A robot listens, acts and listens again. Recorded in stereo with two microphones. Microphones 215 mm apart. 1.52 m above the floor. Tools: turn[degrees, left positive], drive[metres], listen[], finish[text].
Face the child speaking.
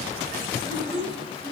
Thought: The child speaking: about 25° left or 155° left.
Action: turn[25]
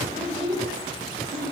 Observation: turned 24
Action: finish[Found it: a child speaking, straight ahead, over 4 m away.]